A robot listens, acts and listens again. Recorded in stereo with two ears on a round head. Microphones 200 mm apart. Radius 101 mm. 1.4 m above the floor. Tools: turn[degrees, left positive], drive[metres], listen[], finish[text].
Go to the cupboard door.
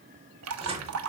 Thought: The cupboard door: about 25° right or 155° right.
Action: turn[-25]
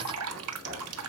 Thought: So it is at 130° right.
Action: turn[-130]
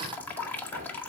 Thought: The cupboard door is now 40° right.
Action: turn[-40]
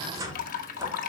Thought: The cupboard door is now 15° right.
Action: turn[-15]
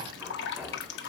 Action: drive[1.0]
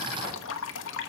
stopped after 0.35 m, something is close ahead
Action: listen[]
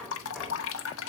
Action: finish[Something is in my way. I am facing the cupboard door but have not reached it.]